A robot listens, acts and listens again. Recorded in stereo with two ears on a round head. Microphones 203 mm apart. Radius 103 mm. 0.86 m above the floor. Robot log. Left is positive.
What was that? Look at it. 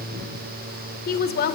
note: The woman speaking: about 45° left or 135° left.
cmd yaw +45
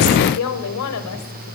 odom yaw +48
note: So it is at 75° left.
cmd yaw +75
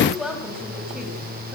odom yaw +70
end: Facing the woman speaking, over 4 m away.